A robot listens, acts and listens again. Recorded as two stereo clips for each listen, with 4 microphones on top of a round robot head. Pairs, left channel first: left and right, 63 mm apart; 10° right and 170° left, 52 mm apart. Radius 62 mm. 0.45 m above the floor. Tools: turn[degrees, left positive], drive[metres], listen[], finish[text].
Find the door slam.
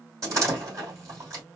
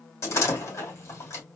Thought: The door slam: 50° right.
Action: turn[-50]
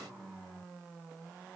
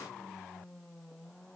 Action: finish[Facing where the door slam came from. I can't hear it now.]